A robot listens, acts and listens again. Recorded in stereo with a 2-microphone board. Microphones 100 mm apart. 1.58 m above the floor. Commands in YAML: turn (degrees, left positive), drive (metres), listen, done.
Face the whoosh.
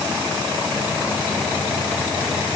listen: true
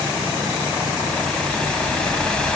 turn: 30
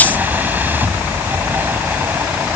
turn: -20
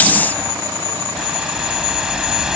done: "Found it: a whoosh, straight ahead."